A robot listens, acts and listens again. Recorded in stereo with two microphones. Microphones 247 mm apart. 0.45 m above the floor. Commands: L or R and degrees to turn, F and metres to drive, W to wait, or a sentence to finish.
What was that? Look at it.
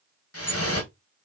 L70
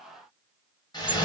L20
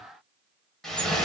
Found it: dripping, straight ahead, 1 to 2 m away.